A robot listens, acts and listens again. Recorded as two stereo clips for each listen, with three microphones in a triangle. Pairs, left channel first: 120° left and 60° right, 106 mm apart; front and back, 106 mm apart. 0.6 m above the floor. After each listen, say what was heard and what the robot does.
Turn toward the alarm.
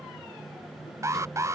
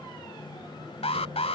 Found it: an alarm, straight ahead.